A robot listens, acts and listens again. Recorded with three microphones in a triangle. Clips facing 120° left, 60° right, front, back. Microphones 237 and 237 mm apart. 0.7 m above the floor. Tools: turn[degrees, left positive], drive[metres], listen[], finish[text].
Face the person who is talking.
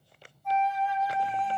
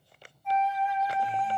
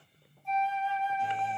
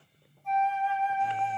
Action: listen[]
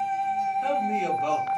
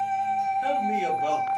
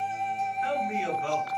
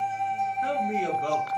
Thought: The man speaking: 140° right.
Action: turn[-140]
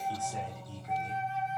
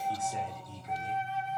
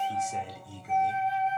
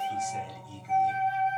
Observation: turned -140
Action: finish[Found it: a man speaking, straight ahead.]